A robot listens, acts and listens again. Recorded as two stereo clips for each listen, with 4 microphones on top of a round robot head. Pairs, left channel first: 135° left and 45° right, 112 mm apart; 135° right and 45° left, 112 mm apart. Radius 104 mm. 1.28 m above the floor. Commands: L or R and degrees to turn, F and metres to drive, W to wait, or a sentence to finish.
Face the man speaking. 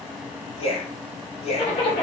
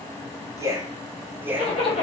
L115
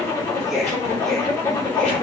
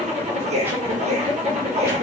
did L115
L45
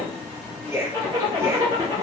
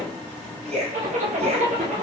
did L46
L25
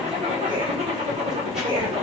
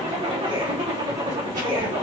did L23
Facing the man speaking, 1 to 2 m away.